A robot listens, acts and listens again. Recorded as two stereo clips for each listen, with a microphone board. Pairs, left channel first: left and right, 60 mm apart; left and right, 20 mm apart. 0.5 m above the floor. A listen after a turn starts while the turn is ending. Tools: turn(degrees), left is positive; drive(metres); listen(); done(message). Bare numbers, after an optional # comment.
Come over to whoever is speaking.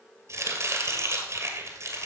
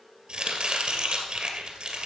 listen()
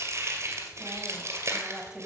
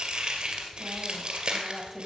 turn(-30)
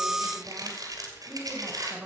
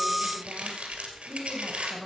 # So it is at 140° right.
turn(-140)
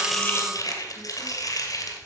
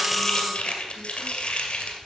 listen()
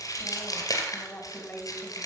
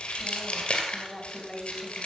# The woman speaking is now 35° left.
turn(35)
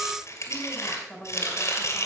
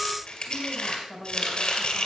# The woman speaking is now 10° left.
turn(10)
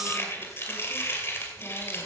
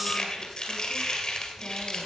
listen()
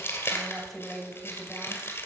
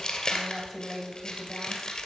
drive(1.0)
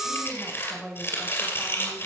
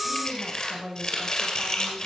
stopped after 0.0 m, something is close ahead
done("Blocked. The woman speaking is further on, straight ahead.")